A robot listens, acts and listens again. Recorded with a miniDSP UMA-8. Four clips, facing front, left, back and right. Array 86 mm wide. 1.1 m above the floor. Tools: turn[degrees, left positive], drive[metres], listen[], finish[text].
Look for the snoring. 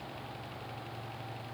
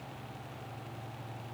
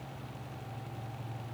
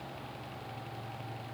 Action: listen[]
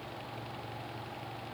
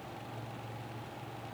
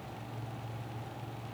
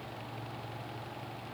Action: listen[]
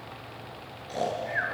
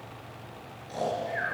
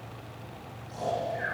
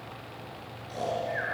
Action: finish[Facing the snoring.]